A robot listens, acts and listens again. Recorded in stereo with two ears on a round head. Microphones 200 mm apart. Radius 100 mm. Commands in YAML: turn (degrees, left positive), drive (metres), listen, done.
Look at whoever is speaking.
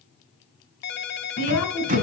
turn: 90
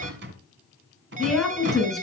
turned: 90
done: "Found it: a woman speaking, straight ahead."